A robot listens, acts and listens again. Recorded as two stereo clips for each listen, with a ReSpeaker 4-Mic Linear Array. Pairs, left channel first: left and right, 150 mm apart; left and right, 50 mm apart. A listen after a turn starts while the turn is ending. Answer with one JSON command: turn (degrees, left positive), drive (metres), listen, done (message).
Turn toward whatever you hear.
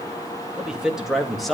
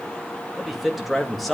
{"turn": 30}
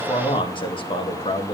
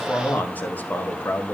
{"turn": 140}
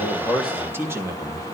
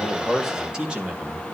{"turn": -20}
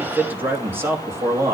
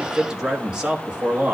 {"turn": -20}
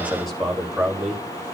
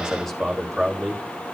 {"done": "Found it: a man speaking, straight ahead."}